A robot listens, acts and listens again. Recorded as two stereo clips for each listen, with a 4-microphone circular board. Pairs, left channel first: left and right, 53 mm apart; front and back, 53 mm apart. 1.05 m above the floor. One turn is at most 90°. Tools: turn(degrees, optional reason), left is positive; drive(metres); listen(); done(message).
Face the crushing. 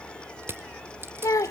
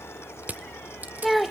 turn(degrees=-90, reason="The crushing: 125° right.")
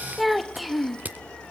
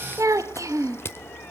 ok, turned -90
turn(degrees=-35, reason="The crushing is now 35° right.")
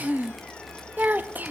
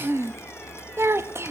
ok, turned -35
listen()
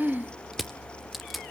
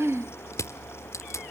done("Facing the crushing, 1 to 2 m away.")